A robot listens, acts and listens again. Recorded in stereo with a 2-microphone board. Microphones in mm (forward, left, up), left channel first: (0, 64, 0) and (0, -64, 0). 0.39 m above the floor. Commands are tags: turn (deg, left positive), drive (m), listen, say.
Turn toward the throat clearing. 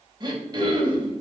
<turn deg="-35"/>
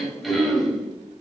<say>Facing the throat clearing.</say>